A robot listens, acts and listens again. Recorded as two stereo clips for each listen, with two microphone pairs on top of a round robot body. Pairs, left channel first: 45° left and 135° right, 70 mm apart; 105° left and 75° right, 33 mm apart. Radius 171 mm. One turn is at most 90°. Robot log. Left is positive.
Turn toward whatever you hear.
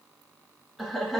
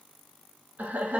note: The laughter: 45° right.
cmd yaw -45
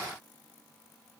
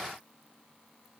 end: Facing the laughter.